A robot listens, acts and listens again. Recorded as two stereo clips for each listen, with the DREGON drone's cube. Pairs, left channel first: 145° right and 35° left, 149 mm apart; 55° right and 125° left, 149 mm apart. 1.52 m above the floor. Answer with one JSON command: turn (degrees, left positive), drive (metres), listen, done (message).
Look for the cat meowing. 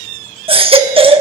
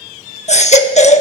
{"listen": true}
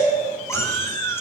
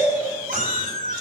{"turn": 140}
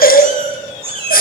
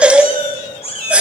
{"turn": -15}
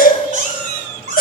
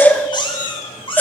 {"done": "Facing the cat meowing, over 4 m away."}